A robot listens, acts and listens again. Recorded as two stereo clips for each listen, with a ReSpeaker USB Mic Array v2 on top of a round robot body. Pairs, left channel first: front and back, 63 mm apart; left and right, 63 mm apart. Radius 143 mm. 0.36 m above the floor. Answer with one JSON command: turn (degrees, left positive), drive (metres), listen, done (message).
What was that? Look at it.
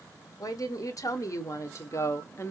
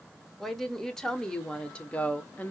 {"turn": 35}
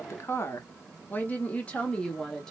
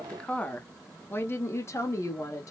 {"turn": 80}
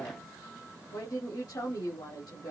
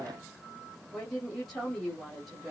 {"done": "Found it: a woman speaking, straight ahead, 1 to 2 m away."}